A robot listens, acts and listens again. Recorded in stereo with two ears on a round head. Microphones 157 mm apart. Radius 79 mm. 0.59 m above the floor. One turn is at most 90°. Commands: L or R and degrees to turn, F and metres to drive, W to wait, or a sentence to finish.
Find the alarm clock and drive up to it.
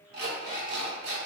R60
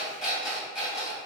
F1.0
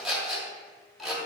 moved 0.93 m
F1.0
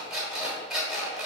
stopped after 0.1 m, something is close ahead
I am next to the alarm clock.